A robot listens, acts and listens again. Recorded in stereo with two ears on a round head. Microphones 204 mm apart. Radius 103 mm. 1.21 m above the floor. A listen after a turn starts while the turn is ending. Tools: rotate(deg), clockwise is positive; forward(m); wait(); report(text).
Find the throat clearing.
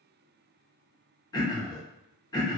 rotate(-20)
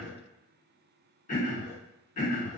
rotate(-140)
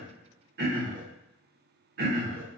rotate(45)
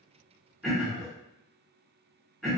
report("Found it: throat clearing, straight ahead, under 1 m away.")